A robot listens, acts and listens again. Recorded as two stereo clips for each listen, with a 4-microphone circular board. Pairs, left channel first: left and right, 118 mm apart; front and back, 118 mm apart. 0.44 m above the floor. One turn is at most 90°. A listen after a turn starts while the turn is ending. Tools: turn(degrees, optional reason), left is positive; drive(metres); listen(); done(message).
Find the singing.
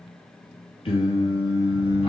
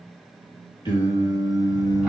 turn(degrees=60, reason="The singing: 60° left.")
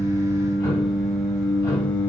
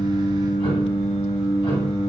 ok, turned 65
turn(degrees=15, reason="The singing is now 15° left.")
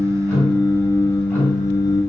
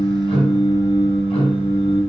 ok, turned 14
turn(degrees=35, reason="The singing is now 35° left.")
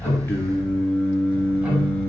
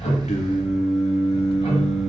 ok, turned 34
turn(degrees=15, reason="The singing is now 15° left.")
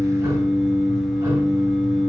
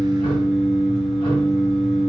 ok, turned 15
done("Found it: singing, straight ahead.")